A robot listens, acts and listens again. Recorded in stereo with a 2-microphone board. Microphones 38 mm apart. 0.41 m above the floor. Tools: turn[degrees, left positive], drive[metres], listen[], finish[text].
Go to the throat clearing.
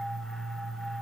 Action: listen[]
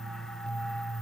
Action: listen[]
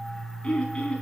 Thought: The throat clearing: about 30° left or 150° left.
Action: turn[30]
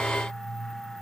Action: listen[]
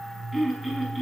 Action: drive[1.0]
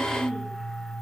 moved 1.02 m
Action: drive[1.0]
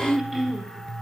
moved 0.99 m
Thought: The throat clearing is now 10° right.
Action: turn[-10]
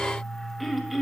Action: drive[1.0]
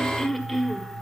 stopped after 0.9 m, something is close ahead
Action: finish[I am next to the throat clearing.]